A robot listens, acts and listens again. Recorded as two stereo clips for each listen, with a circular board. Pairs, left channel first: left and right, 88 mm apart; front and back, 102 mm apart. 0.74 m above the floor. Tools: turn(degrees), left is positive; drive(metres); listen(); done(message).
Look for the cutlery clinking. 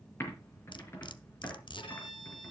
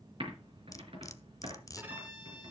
turn(degrees=60)
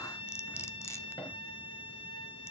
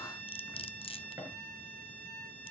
turn(degrees=30)
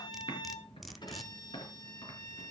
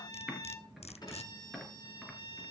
done("Facing the cutlery clinking.")